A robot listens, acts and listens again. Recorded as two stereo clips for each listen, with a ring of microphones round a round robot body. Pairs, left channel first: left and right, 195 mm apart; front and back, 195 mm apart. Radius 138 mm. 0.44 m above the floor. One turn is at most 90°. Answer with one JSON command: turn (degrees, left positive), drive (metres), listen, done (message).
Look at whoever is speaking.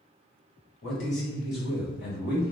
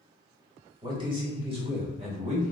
{"turn": 90}
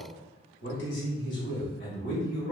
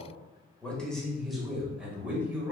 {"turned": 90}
{"turn": 90}
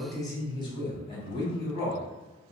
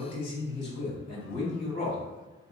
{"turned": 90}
{"turn": 30}
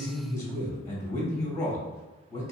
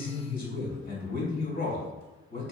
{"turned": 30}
{"turn": 15}
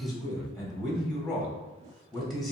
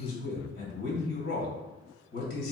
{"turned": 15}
{"done": "Facing the man speaking."}